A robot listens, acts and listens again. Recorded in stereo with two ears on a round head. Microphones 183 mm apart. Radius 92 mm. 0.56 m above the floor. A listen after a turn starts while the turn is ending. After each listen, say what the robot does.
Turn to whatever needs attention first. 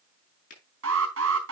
Turn 90° right.
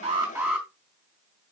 Facing the alarm.